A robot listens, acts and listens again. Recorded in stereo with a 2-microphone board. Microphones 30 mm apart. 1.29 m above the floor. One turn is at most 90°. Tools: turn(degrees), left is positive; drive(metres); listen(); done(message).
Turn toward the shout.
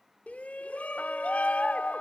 turn(degrees=60)
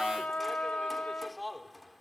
done("Facing the shout.")